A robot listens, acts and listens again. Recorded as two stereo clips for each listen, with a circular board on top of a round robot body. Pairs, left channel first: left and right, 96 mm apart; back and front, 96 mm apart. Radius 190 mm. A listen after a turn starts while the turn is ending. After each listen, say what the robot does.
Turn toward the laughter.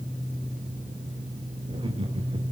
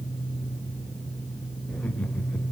Turn 105° right.
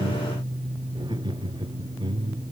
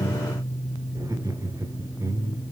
Turn 60° right.
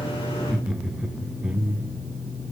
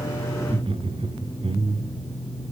Turn 15° right.
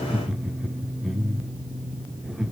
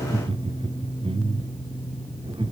Found it: laughter, straight ahead, 2 to 4 m away.